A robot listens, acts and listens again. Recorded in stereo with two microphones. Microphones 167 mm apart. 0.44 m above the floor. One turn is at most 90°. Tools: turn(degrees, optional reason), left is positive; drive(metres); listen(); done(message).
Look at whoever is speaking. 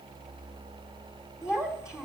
turn(degrees=-30)
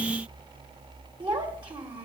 turn(degrees=-90, reason="So it is at 145° right.")
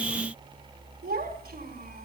turn(degrees=-80, reason="The child speaking is now 80° right.")
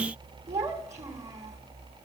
turn(degrees=-20, reason="The child speaking is now 20° right.")
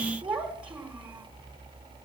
turn(degrees=-10, reason="The child speaking is now 10° right.")
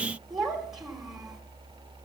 done("Facing the child speaking.")